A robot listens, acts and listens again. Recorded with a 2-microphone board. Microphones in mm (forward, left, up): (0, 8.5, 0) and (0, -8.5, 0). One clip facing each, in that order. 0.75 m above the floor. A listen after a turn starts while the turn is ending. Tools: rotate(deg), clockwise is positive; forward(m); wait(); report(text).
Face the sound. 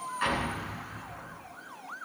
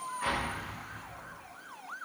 rotate(-50)
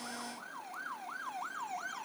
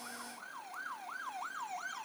wait()
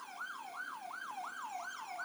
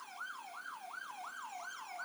report("I heard an explosion, but can't make it out now. It was about straight ahead or 80° left.")